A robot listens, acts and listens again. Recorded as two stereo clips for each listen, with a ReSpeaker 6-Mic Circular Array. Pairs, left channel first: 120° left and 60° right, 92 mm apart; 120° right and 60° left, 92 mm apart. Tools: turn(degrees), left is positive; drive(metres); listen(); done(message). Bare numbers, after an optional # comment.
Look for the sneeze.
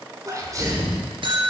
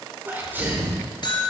# The sneeze: 10° right.
turn(-10)
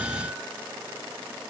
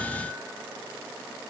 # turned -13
done("I heard a sneeze from this way, but can't make it out now.")